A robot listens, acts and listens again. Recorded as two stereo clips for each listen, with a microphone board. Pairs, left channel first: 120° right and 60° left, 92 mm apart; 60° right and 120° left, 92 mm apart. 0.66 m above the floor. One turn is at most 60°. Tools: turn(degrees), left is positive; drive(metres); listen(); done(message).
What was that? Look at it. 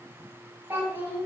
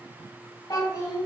turn(degrees=-10)
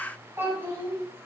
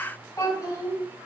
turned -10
done("Found it: a child speaking, straight ahead, 2 to 4 m away.")